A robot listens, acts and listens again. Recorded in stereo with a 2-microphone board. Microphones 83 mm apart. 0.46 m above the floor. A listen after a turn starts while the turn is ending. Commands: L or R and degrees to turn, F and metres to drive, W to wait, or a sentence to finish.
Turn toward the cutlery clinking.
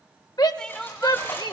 L25
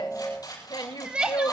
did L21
L130
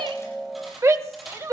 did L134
Found it: cutlery clinking, straight ahead.